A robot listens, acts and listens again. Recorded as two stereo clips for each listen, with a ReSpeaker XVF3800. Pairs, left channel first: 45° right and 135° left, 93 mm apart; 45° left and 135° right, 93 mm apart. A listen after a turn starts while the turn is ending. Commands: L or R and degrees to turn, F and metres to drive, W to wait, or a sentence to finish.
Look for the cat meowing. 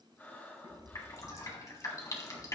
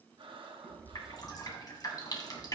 L130
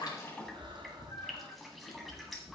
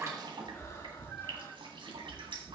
R40
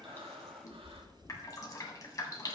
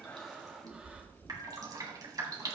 Facing the cat meowing.